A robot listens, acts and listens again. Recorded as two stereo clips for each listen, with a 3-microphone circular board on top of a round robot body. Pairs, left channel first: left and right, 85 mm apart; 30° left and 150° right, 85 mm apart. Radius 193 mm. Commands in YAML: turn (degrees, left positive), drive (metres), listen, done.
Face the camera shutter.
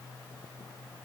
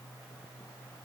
listen: true
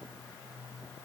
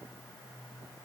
listen: true
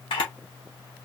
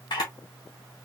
turn: 70
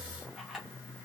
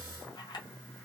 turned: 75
done: "Facing the camera shutter, under 1 m away."